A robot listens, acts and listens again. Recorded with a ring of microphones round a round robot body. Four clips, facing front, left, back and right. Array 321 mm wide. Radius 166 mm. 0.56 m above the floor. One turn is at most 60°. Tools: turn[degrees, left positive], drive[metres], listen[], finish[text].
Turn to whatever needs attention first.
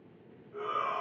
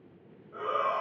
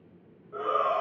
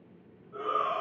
Thought: The shout: 170° left.
Action: turn[60]
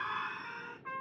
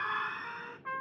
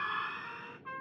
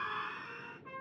Thought: The shout is now 120° left.
Action: turn[60]
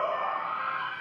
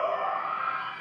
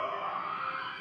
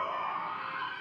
Thought: The shout is now 55° left.
Action: turn[55]
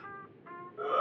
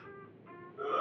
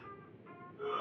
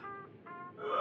Action: finish[Found it: a shout, straight ahead, 2 to 4 m away.]